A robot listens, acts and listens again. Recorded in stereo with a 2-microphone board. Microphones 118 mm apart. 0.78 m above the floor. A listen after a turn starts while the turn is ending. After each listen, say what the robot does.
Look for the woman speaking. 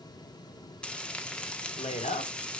Turn 65° left.
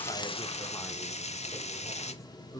Turn 25° left.
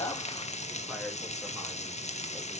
Keep listening.
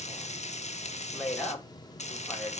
Found it: a woman speaking, straight ahead.